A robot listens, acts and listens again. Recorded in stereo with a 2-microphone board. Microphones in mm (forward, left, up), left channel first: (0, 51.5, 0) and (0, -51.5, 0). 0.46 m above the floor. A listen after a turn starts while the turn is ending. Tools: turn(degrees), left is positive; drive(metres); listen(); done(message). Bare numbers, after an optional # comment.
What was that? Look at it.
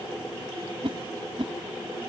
# The whoosh: about 60° right or 120° right.
turn(-60)
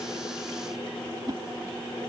# So it is at 50° right.
turn(-50)
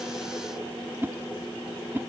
# The whoosh is now 25° right.
turn(-25)
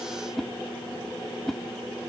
done("Found it: a whoosh, straight ahead.")